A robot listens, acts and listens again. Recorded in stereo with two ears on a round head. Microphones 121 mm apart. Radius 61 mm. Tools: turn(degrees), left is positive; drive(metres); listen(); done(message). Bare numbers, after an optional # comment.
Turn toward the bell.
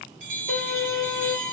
# The bell: about 60° right or 120° right.
turn(-60)
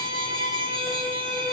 listen()
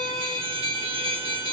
# So it is at 50° right.
turn(-50)
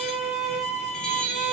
done("Found it: a bell, straight ahead, under 1 m away.")